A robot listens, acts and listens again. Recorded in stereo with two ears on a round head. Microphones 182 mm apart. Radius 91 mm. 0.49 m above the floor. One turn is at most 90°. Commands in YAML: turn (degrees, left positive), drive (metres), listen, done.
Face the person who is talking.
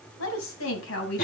turn: 75
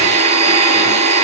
listen: true
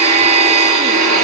listen: true
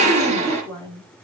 turn: 15
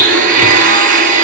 listen: true
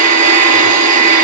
listen: true
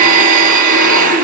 done: "I heard a woman speaking from this way, but can't make it out now."